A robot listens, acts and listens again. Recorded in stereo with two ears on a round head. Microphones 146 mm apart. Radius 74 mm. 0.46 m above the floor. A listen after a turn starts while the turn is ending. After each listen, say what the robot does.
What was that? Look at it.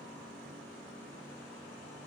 Keep listening.
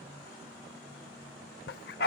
Turn 65° left.
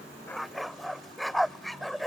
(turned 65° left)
Found it: a dog barking, straight ahead.